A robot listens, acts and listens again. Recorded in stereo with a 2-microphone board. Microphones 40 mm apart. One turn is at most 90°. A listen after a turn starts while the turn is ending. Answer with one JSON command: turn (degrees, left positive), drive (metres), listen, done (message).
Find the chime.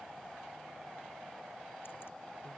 {"listen": true}
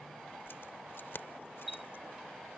{"turn": -30}
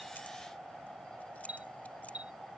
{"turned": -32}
{"turn": -90}
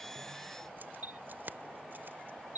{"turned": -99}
{"turn": -50}
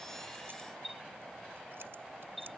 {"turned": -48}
{"done": "Facing the chime."}